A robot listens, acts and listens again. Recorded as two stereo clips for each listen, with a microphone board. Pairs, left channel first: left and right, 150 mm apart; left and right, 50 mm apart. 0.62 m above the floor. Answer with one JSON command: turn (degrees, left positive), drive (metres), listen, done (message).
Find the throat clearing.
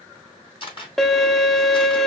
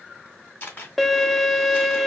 {"listen": true}
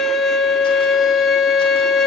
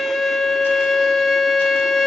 {"listen": true}
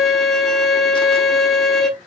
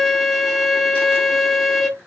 {"done": "I can't make out throat clearing to turn to."}